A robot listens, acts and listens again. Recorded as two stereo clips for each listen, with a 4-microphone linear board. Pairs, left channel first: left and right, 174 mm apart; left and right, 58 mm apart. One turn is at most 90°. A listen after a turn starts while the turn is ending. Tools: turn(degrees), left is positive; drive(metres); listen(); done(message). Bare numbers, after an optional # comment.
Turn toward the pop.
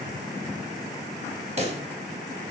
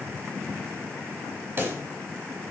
# The pop: about 35° right or 145° right.
turn(-35)
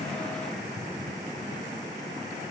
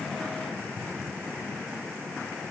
listen()
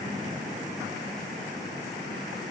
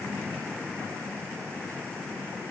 done("I heard a pop, but can't make it out now. It was about straight ahead or 110° right.")